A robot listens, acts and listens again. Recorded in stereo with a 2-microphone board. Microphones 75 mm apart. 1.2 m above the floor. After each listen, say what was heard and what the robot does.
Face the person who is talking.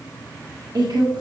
The woman speaking: about 65° right or 115° right. Turn 65° right.
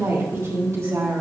So it is at 45° right. Turn 45° right.
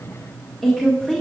Found it: a woman speaking, straight ahead, 1 to 2 m away.